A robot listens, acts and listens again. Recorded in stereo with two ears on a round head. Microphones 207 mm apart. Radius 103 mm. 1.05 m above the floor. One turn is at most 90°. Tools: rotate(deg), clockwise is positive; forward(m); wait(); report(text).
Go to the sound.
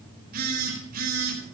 rotate(40)
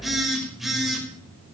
forward(1.0)
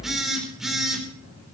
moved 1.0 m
forward(1.0)
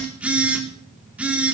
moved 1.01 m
forward(1.0)
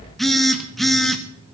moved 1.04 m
forward(1.0)
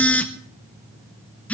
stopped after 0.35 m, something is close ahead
report("I am next to the phone buzzing.")